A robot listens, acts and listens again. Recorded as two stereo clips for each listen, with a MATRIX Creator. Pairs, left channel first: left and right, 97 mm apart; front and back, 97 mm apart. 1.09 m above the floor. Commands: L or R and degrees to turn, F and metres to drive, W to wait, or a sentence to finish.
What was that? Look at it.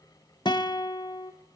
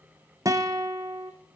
L125
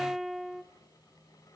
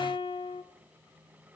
Found it: a guitar, straight ahead.